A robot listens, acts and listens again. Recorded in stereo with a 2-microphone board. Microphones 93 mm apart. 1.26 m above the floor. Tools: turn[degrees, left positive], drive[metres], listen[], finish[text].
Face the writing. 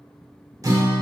Action: listen[]
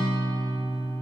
Action: listen[]
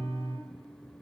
Action: finish[I can't make out writing to turn to.]